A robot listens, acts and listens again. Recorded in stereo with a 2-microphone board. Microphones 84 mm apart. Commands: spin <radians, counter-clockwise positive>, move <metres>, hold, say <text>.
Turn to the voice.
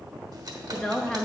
spin 0.52
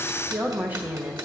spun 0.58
spin -0.44
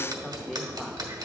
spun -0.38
hold
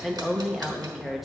say Facing the woman speaking, 1 to 2 m away.